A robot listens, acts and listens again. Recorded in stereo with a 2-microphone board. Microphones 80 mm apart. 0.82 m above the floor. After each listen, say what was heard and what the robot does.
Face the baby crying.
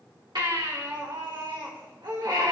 The baby crying: about 70° right or 110° right. Turn 70° right.
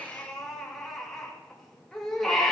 Found it: a baby crying, straight ahead.